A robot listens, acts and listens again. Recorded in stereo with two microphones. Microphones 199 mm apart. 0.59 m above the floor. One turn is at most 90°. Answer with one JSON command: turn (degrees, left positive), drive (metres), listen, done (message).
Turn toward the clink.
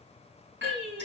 {"turn": -65}
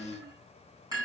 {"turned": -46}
{"turn": -15}
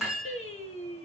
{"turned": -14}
{"done": "Found it: a clink, straight ahead, over 4 m away."}